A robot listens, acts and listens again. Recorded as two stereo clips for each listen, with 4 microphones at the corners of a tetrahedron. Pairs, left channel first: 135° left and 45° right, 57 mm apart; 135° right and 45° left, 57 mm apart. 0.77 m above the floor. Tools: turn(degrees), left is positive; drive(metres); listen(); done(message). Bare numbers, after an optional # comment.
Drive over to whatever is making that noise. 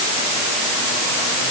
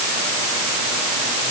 listen()
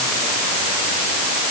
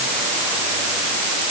listen()
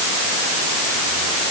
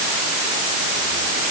done("I can't make out anything.")